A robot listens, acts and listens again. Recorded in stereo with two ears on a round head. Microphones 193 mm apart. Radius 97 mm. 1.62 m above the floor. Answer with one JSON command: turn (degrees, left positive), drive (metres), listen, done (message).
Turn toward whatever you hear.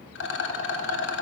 {"turn": 55}
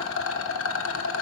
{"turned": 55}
{"turn": 65}
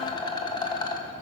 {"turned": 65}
{"turn": 20}
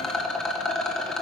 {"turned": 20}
{"done": "Found it: a rattle, straight ahead."}